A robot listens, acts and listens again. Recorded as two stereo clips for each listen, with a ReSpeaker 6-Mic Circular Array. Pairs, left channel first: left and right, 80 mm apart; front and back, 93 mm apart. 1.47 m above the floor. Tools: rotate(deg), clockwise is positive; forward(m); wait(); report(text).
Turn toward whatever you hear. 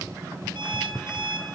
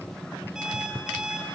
rotate(100)
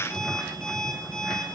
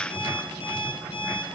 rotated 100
rotate(-10)
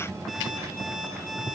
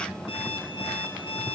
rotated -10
report("Found it: an alarm clock, straight ahead.")